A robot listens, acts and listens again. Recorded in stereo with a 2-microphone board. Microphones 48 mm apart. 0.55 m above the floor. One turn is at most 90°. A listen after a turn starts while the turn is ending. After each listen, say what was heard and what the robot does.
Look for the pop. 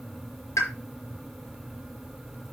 Turn 90° left.
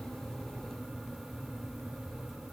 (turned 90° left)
I heard a pop from this way, but can't make it out now.